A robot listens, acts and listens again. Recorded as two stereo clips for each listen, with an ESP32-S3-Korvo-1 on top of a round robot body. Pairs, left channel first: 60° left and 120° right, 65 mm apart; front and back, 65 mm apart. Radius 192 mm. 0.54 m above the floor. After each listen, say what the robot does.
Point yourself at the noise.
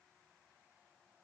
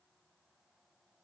Keep listening.
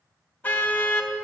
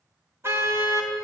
Turn 125° left.
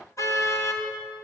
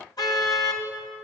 Turn 20° left.
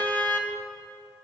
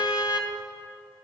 Facing the car horn, 2 to 4 m away.